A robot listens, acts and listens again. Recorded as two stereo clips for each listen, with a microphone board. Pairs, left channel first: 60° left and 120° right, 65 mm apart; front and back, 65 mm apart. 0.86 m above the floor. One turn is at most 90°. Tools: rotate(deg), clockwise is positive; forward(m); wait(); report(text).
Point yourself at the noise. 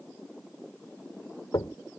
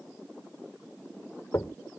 rotate(-40)
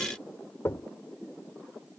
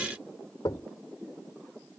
rotate(-10)
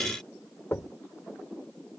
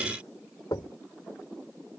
report("Found it: knocking, straight ahead.")